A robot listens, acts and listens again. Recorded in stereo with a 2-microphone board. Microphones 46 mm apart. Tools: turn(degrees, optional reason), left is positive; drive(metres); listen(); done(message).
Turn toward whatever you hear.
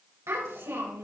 turn(degrees=-90)
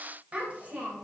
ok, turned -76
turn(degrees=-30, reason="So it is at 30° right.")
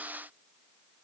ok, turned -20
turn(degrees=-10, reason="Nothing new. It was at 10° right.")
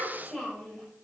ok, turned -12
done("Found it: a child speaking, straight ahead.")